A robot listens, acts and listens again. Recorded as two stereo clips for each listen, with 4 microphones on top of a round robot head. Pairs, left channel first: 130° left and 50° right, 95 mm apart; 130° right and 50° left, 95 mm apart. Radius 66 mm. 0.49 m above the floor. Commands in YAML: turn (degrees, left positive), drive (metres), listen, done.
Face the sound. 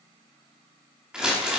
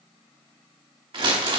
turn: 30
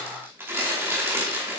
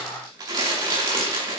turn: 10
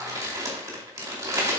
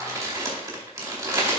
done: "Facing the crumpling, 2 to 4 m away."